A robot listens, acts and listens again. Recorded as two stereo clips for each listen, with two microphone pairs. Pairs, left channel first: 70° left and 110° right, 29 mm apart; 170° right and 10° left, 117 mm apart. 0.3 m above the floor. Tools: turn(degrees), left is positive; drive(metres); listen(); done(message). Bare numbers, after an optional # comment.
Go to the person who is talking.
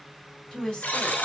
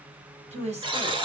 # The woman speaking: 15° left.
turn(15)
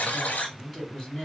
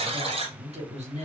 drive(1.0)
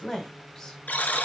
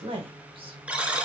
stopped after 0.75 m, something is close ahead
done("I am next to the woman speaking.")